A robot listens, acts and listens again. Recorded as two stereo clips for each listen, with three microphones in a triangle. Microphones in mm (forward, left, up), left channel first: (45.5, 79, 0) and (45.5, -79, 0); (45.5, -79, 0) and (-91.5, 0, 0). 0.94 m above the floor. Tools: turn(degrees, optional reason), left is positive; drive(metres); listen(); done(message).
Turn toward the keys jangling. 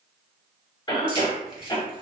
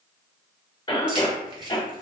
turn(degrees=-145, reason="The keys jangling: 145° right.")
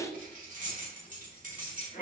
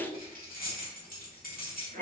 turn(degrees=-55, reason="The keys jangling is now 55° right.")
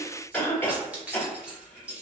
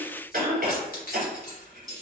done("Found it: keys jangling, straight ahead, 1 to 2 m away.")